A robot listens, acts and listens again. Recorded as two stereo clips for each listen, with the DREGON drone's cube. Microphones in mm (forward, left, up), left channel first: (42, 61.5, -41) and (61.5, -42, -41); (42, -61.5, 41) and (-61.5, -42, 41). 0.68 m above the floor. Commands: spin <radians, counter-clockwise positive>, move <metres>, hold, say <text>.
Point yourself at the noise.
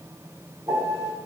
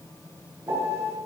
spin -2.27
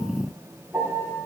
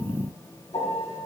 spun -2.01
spin -0.26
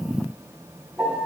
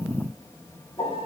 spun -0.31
say Found it: a piano, straight ahead.